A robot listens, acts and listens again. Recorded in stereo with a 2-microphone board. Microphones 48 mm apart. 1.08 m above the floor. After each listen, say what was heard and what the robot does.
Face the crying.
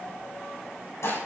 Keep listening.
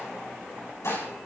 Keep listening.
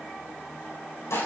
I can't make out crying to turn to.